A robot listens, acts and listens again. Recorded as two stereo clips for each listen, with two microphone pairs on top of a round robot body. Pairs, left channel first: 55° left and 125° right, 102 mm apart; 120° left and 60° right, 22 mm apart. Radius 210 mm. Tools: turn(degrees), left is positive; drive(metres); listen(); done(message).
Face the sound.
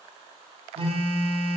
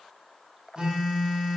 turn(degrees=-110)
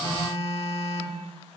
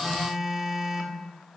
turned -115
turn(degrees=10)
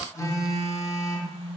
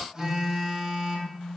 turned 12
done("Facing the phone buzzing.")